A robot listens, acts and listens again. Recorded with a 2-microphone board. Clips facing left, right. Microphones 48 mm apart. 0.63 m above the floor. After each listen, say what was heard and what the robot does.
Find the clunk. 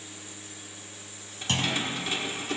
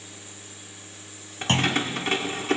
The clunk: about 35° right or 145° right. Turn 35° right.
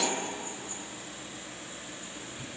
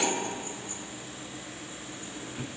Keep listening.
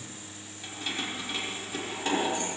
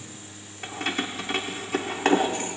I heard a clunk, but can't make it out now. It was about straight ahead or 110° right.